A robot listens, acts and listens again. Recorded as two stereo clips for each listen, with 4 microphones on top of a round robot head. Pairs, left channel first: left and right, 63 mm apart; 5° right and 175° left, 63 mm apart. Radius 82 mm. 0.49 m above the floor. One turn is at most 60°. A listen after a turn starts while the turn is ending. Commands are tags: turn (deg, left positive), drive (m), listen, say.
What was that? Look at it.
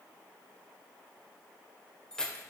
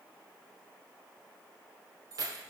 <turn deg="60"/>
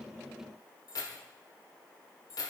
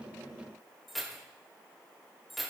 <turn deg="60"/>
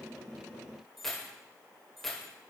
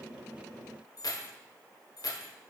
<say>Facing the keys jangling, 1 to 2 m away.</say>